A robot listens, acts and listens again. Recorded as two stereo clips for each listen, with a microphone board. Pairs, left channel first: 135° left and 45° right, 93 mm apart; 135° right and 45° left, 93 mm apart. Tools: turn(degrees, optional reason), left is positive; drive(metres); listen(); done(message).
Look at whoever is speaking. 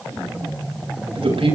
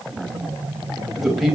turn(degrees=-45, reason="The man speaking: 45° right.")
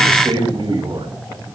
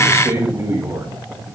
turn(degrees=-20, reason="The man speaking is now 20° right.")
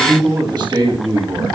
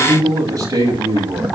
done("Found it: a man speaking, straight ahead, over 4 m away.")